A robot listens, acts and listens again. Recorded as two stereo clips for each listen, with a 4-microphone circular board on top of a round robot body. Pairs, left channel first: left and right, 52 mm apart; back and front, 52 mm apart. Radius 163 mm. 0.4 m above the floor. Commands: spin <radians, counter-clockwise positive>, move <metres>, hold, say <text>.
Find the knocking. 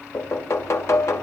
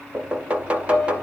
spin 1.13
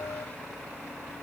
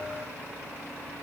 hold
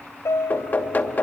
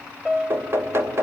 spin 0.61
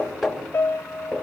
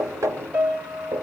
say Found it: knocking, straight ahead, 2 to 4 m away.